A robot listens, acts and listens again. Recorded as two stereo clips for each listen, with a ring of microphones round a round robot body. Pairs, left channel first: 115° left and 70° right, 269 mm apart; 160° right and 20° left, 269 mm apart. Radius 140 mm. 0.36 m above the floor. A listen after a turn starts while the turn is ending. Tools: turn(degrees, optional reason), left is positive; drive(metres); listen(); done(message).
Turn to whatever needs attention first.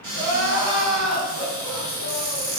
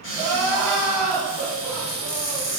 turn(degrees=-75, reason="The crying: 75° right.")
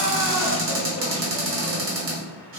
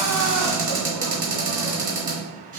listen()
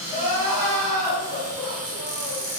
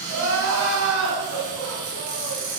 turn(degrees=15, reason="The crying is now 15° left.")
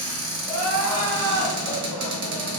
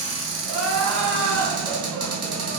done("Found it: crying, straight ahead.")